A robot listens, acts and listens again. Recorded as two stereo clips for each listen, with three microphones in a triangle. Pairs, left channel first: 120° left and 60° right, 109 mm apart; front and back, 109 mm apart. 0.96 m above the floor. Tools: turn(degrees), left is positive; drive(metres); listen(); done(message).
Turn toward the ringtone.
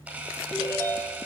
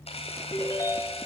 turn(degrees=60)
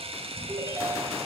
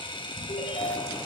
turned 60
done("Found it: a ringtone, straight ahead.")